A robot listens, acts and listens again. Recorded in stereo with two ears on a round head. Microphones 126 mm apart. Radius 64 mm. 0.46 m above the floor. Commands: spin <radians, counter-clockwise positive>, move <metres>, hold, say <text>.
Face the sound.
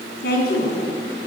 spin 1.57
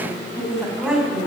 say Facing the woman speaking.